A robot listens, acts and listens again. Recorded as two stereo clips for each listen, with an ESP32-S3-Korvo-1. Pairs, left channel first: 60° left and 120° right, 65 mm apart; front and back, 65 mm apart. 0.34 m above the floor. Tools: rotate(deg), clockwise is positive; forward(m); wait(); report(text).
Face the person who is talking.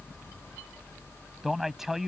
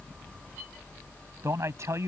rotate(-155)
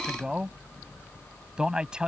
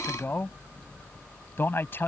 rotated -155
rotate(45)
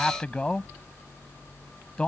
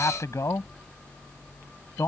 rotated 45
rotate(10)
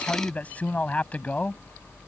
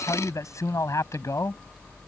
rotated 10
report("Facing the man speaking.")